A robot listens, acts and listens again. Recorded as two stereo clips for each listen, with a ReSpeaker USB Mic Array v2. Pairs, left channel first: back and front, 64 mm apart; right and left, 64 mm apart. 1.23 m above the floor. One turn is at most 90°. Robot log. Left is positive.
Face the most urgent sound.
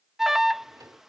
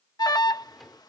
note: The alarm: 85° right.
cmd yaw -85
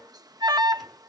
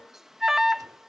end: Facing the alarm.